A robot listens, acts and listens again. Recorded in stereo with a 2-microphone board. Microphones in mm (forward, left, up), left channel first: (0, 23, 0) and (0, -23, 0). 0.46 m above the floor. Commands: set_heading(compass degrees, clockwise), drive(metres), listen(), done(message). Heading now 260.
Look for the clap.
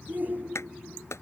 set_heading(170)
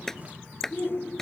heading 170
set_heading(160)
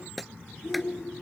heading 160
done("Found it: a clap, straight ahead.")